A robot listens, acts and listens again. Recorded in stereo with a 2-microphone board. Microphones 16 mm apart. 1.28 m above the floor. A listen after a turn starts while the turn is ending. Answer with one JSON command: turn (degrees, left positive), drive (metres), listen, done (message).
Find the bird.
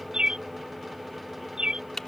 {"turn": -90}
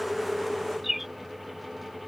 {"turn": -10}
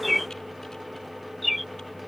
{"done": "Found it: a bird, straight ahead."}